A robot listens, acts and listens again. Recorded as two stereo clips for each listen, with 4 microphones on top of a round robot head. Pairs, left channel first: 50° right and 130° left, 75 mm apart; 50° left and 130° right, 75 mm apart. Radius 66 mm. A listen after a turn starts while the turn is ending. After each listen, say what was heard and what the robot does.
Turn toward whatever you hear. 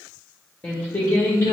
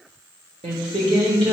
The singing: 100° right. Turn 100° right.
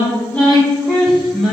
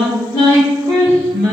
The singing is now 50° left. Turn 50° left.
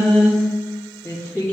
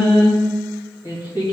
The singing is now 15° left. Turn 15° left.
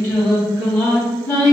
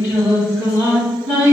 Found it: singing, straight ahead.